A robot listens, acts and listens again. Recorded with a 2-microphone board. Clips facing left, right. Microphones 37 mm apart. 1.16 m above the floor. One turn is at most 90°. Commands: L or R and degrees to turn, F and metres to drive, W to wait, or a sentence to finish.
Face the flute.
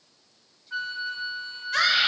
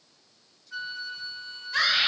L50
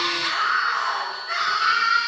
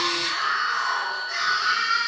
W
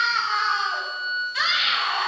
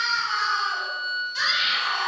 Found it: a flute, straight ahead.